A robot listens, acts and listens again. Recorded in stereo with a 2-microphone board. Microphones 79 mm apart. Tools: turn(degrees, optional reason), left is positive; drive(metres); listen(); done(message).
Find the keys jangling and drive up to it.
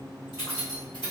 turn(degrees=90)
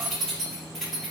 drive(metres=1.0)
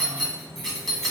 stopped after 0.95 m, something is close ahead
done("I am next to the keys jangling.")